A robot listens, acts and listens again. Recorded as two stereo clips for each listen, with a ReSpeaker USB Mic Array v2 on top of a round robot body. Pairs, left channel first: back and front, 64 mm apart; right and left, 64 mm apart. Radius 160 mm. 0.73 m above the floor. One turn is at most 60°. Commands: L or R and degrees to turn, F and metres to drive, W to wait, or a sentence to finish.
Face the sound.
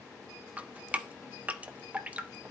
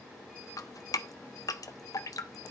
R60
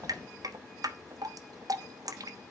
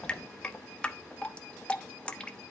R15
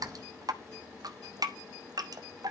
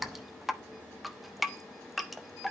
Facing the dripping, 1 to 2 m away.